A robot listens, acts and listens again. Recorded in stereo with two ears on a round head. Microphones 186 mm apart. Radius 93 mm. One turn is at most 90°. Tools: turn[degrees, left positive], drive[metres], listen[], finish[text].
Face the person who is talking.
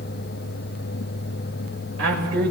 Thought: The man speaking: about 70° right or 110° right.
Action: turn[-70]
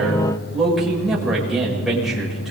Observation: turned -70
Action: finish[Found it: a man speaking, straight ahead, over 4 m away.]